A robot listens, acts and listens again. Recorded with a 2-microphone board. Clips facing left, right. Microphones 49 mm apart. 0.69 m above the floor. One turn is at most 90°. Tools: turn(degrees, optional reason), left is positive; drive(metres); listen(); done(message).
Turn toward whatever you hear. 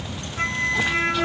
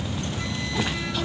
turn(degrees=55, reason="The flute: about 55° left or 125° left.")
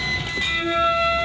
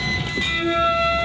done("Found it: a flute, straight ahead.")